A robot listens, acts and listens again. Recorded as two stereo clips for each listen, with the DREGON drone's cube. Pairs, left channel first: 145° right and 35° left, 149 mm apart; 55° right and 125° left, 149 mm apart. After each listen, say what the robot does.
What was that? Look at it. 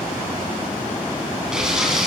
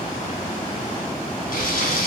Turn 50° right.
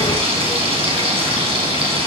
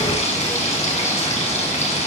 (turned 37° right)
Turn 15° right.
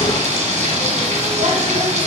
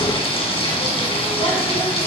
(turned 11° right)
Facing the frying.